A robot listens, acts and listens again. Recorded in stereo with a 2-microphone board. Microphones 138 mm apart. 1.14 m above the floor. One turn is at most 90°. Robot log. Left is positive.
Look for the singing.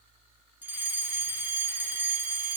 cmd idle
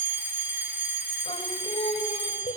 note: The singing: about 50° left or 130° left.
cmd yaw +50
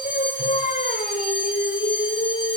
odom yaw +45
note: So it is at 60° left.
cmd yaw +60
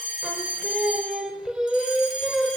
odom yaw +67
end: Facing the singing, 2 to 4 m away.